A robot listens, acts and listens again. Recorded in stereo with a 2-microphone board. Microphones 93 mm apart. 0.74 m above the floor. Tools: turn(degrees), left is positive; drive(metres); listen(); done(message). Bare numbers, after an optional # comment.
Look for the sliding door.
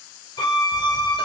listen()
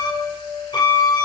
listen()
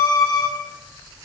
turn(30)
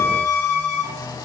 # So it is at 135° left.
turn(135)
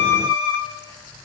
listen()
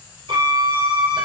listen()
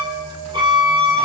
done("I heard a sliding door from this way, but can't make it out now.")